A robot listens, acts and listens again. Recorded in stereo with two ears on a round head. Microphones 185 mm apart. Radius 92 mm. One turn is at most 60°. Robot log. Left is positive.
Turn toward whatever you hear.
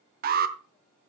note: The alarm: about 45° right or 135° right.
cmd yaw -45
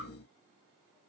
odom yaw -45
cmd idle
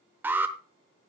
note: So it is at 10° right.
cmd yaw -10
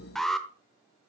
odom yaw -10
end: Facing the alarm.